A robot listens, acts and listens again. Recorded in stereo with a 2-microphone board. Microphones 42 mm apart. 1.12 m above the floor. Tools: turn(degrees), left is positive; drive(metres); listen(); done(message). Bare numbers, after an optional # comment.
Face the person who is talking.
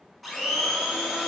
listen()
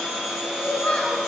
# The child speaking: about 25° left or 155° left.
turn(25)
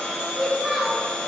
# So it is at 10° right.
turn(-10)
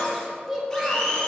# The child speaking is now 15° right.
turn(-15)
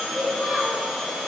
done("Found it: a child speaking, straight ahead.")